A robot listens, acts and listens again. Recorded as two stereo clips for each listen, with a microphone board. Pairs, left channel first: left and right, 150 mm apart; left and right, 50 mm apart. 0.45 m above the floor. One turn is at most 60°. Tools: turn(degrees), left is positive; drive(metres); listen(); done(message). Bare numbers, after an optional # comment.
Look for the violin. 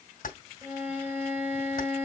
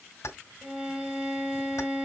turn(-30)
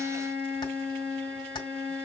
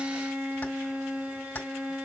# So it is at 135° right.
turn(-60)
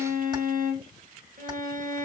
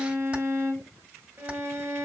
# The violin is now 80° right.
turn(-60)
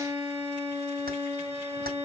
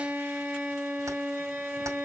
# The violin is now 20° right.
turn(-20)
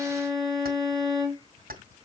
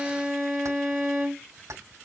done("Found it: a violin, straight ahead, 2 to 4 m away.")